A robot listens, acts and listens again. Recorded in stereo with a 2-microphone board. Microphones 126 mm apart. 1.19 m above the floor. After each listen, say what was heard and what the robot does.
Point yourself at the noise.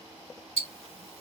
The ticking: about 65° right or 115° right. Turn 65° right.
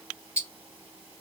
So it is at 15° right. Turn 15° right.
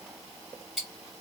Found it: ticking, straight ahead.